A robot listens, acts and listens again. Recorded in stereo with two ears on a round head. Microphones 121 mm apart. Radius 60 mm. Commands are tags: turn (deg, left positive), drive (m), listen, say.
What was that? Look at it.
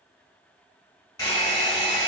<turn deg="25"/>
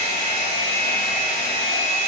<turn deg="125"/>
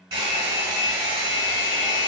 <turn deg="-35"/>
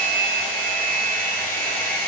<turn deg="15"/>
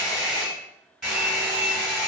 <say>Facing the hair dryer.</say>